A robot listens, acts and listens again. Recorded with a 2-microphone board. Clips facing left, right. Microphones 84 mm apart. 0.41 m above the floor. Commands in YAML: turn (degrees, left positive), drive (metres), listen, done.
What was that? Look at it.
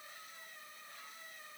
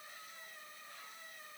listen: true
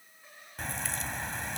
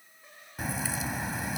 turn: -30
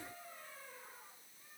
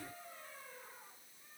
listen: true
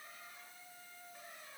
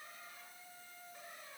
done: "I heard a crack, but can't make it out now. It was about 25° left or 145° right."